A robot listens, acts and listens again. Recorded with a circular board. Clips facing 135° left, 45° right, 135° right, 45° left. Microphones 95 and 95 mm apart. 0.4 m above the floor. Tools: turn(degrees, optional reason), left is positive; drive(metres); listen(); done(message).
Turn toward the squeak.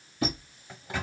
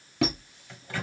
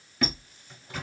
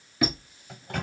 turn(degrees=-35, reason="The squeak: 35° right.")
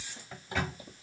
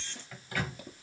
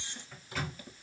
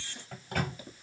listen()
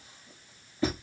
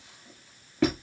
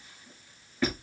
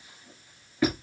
turn(degrees=-30, reason="The squeak is now 30° right.")
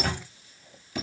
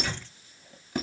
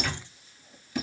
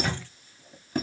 done("Facing the squeak, 1 to 2 m away.")